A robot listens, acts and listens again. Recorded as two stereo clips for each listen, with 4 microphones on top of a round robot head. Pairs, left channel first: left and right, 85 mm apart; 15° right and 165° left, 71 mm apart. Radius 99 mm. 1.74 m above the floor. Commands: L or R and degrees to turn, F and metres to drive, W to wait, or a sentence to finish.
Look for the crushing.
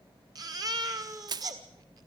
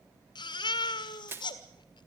R130
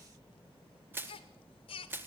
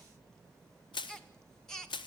R20
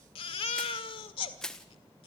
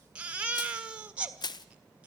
Facing the crushing.